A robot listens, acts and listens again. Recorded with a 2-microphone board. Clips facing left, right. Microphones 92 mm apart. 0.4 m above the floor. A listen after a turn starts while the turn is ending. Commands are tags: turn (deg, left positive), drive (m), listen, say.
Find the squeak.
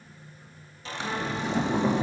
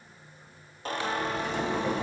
<turn deg="-50"/>
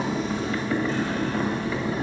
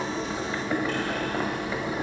<listen/>
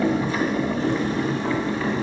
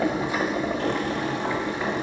<listen/>
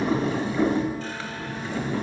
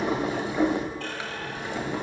<say>I heard a squeak, but can't make it out now. It was about straight ahead or 80° right.</say>